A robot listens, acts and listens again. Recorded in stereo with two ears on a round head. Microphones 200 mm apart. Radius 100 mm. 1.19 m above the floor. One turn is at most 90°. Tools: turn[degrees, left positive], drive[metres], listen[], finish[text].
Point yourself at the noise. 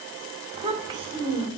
Thought: The child speaking: about 20° right or 160° right.
Action: turn[-20]
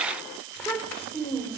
Thought: So it is at 10° left.
Action: turn[10]
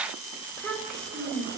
Action: finish[Found it: a child speaking, straight ahead, 2 to 4 m away.]